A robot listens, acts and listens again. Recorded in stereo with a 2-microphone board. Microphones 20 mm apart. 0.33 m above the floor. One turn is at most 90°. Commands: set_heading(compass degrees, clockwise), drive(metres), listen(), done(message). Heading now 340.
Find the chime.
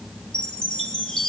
set_heading(295)
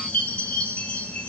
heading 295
set_heading(205)
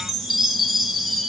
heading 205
done("Found it: a chime, straight ahead, 1 to 2 m away.")